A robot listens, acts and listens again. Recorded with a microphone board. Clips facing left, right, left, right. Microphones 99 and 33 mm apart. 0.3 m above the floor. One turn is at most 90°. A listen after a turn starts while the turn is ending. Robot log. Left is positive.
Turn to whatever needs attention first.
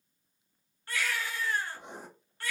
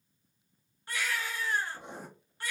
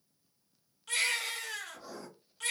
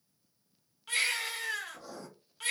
cmd yaw -30
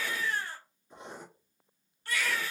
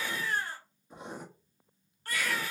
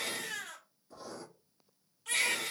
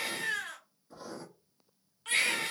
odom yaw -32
note: So it is at 135° right.
cmd yaw -90
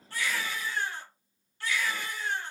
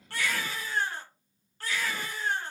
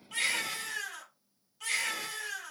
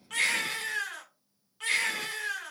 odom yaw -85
note: The baby crying is now 50° right.
cmd yaw -50
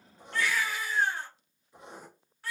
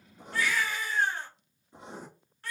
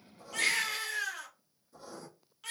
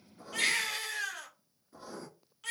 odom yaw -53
end: Facing the baby crying.